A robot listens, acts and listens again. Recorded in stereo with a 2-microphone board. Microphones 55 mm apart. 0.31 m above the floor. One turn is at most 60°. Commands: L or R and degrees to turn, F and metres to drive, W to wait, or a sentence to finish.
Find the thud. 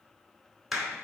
W
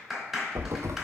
R60
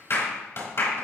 W
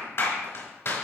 I heard a thud, but can't make it out now. It was about 5° right or 55° right.